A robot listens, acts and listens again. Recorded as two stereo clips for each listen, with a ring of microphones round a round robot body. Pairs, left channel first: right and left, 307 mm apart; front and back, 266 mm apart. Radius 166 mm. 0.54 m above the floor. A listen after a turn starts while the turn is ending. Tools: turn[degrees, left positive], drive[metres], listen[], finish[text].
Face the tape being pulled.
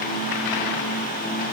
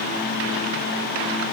Action: listen[]
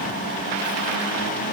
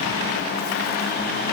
Action: listen[]
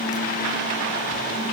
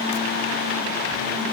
Action: finish[I can't make out tape being pulled.]